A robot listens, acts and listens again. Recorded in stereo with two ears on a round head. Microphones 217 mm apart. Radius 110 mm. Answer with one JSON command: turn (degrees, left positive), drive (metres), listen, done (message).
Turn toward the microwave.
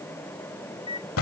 {"turn": 25}
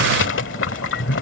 {"listen": true}
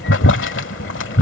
{"listen": true}
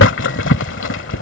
{"done": "I heard a microwave, but can't make it out now. It was about straight ahead or 130° left."}